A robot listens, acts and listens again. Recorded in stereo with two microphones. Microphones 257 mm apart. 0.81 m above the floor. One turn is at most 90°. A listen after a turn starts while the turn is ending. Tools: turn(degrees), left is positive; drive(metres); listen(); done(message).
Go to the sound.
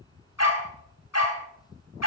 turn(degrees=90)
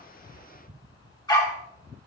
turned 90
turn(degrees=15)
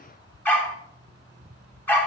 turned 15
drive(metres=1.0)
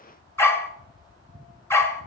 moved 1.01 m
turn(degrees=10)
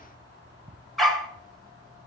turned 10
drive(metres=1.0)
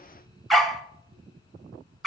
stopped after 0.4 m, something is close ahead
done("I am next to the dog barking.")